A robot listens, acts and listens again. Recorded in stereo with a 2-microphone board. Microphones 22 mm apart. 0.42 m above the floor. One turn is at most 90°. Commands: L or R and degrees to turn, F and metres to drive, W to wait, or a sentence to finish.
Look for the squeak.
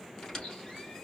L30
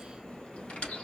L90
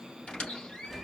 L55
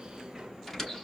L10
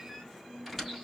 Facing the squeak, 2 to 4 m away.